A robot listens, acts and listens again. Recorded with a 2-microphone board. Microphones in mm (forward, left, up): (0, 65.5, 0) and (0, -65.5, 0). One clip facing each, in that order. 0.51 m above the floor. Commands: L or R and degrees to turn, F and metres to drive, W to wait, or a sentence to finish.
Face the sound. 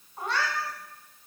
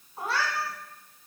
R30
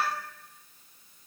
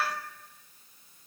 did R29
L25
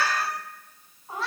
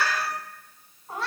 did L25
Facing the cat meowing.